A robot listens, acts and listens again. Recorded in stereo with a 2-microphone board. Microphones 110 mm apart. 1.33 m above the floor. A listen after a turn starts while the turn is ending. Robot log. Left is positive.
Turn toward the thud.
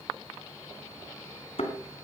note: The thud: about 60° left or 120° left.
cmd yaw +60
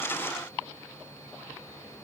cmd idle
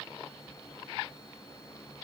end: I heard a thud, but can't make it out now. It was about straight ahead or 60° left.